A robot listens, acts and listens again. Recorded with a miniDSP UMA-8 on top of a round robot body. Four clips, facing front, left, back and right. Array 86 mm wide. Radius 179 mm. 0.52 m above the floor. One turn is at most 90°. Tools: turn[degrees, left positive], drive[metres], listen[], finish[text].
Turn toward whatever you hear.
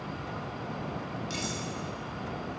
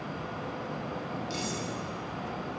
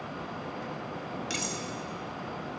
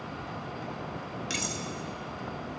Thought: The cutlery clinking: 120° right.
Action: turn[-90]
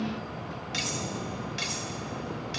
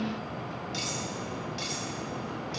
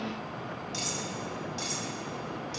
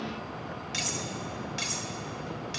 Thought: The cutlery clinking is now 35° right.
Action: turn[-35]
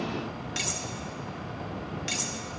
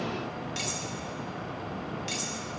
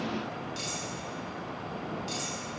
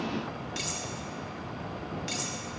Action: finish[Facing the cutlery clinking.]